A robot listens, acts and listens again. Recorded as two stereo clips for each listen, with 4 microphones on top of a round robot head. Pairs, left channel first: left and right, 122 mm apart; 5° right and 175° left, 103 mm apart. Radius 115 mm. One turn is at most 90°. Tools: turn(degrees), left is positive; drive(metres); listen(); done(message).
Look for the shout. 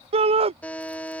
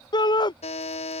turn(degrees=-50)
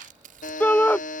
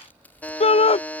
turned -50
turn(degrees=15)
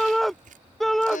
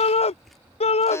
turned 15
done("Found it: a shout, straight ahead.")